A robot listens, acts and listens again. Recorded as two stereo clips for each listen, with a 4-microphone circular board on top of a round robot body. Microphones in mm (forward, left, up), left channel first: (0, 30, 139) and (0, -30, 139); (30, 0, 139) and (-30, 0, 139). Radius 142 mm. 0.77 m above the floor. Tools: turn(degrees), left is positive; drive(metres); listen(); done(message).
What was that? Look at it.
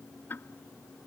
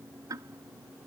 turn(degrees=150)
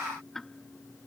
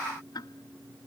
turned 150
done("Facing the ticking.")